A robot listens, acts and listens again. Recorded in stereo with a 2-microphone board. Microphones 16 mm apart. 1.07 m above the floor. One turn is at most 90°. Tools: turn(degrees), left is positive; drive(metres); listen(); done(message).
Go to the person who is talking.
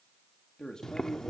turn(degrees=50)
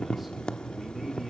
listen()
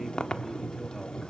listen()
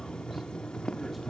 done("I heard a man speaking, but can't make it out now. It was about straight ahead or 80° left. I did not reach it.")